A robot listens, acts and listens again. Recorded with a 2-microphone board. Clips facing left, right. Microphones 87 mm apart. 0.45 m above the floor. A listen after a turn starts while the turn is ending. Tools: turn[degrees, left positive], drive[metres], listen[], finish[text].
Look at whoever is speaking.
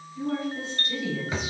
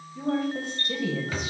Thought: The woman speaking: about 55° right or 125° right.
Action: turn[-55]
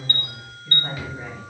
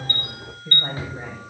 Thought: So it is at 60° right.
Action: turn[-60]
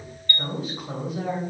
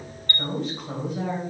Action: finish[Facing the woman speaking, 2 to 4 m away.]